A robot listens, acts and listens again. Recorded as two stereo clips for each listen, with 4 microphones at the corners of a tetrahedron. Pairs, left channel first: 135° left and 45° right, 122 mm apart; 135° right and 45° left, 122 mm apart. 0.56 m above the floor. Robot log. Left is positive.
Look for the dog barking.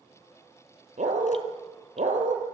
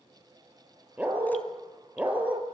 note: The dog barking: 35° right.
cmd yaw -35
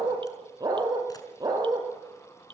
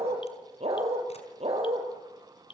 note: The dog barking is now 15° left.
cmd yaw +15
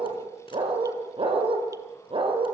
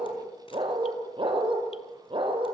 end: Found it: a dog barking, straight ahead, over 4 m away.